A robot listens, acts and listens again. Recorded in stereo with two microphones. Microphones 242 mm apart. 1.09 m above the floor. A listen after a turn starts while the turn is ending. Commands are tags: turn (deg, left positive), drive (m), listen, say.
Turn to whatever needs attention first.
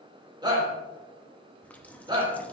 <turn deg="-20"/>
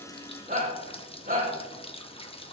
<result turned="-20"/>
<turn deg="-145"/>
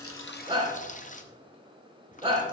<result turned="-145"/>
<turn deg="-20"/>
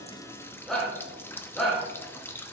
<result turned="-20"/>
<say>Found it: a shout, straight ahead.</say>